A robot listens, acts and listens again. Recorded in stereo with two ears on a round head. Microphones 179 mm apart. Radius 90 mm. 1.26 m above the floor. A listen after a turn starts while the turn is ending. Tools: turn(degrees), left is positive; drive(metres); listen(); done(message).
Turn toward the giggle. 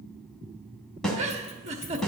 turn(degrees=-35)
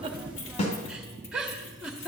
done("Found it: a giggle, straight ahead, 1 to 2 m away.")